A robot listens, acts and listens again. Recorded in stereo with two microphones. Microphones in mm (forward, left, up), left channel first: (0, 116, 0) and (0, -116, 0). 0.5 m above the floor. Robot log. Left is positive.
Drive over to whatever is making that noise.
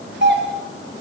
note: The doorbell: about 55° right or 125° right.
cmd yaw -55
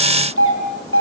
note: So it is at 75° right.
cmd yaw -75
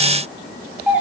cmd fwd 1.0
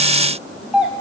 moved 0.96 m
cmd fwd 1.0
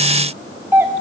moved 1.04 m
note: The doorbell is now 10° right.
cmd yaw -10
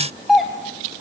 cmd fwd 1.0
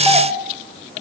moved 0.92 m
cmd idle
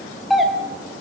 cmd fwd 1.0
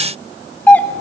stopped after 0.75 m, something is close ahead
note: The doorbell is now 10° left.
cmd yaw +10
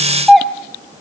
end: I am next to the doorbell.